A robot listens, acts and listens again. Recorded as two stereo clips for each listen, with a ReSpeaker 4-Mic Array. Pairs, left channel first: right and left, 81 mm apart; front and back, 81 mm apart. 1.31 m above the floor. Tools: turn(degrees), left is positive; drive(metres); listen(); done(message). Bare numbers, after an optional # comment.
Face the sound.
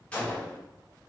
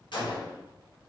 # The gunshot: 15° right.
turn(-15)
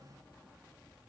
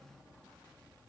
done("I heard a gunshot from this way, but can't make it out now.")